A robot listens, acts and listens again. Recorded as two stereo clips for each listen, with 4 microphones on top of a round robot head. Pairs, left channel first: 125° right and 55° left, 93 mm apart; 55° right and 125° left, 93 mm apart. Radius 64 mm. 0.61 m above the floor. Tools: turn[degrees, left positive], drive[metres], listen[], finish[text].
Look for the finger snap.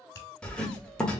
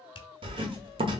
Thought: The finger snap: 70° right.
Action: turn[-70]
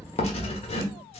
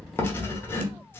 Action: listen[]
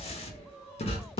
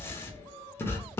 Action: listen[]
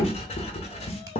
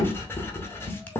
Action: finish[Facing where the finger snap came from. I can't hear it now.]